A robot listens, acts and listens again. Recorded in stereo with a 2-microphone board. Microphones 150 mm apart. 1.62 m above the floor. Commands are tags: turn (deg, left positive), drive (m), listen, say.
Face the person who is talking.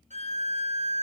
<listen/>
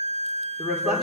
<turn deg="30"/>
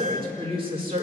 <turn deg="-40"/>
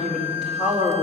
<say>Found it: a woman speaking, straight ahead.</say>